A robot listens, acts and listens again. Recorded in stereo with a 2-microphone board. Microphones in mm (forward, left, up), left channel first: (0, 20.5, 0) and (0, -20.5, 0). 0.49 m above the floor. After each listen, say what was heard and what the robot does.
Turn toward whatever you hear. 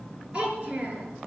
The child speaking: about 25° right or 155° right. Turn 25° right.
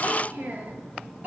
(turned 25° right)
So it is at 130° right. Turn 130° right.
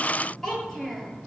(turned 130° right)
The child speaking is now 10° left. Turn 10° left.
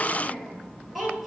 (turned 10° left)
Found it: a child speaking, straight ahead, over 4 m away.